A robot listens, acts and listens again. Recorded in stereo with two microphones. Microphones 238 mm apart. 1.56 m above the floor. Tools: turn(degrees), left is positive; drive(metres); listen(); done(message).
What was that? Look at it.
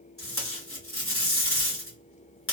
turn(degrees=65)
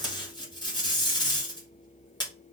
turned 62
turn(degrees=20)
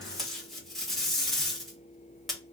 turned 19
done("Found it: tape being pulled, straight ahead.")